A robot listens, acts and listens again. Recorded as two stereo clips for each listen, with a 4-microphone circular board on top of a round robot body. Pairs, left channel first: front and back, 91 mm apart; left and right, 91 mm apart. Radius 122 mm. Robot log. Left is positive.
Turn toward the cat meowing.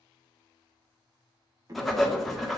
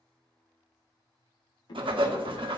note: The cat meowing: 130° left.
cmd yaw +130
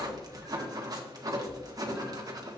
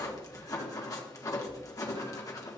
cmd idle
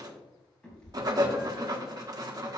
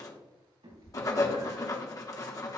note: The cat meowing is now 80° right.
cmd yaw -80
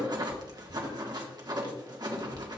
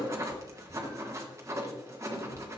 end: Found it: a cat meowing, straight ahead.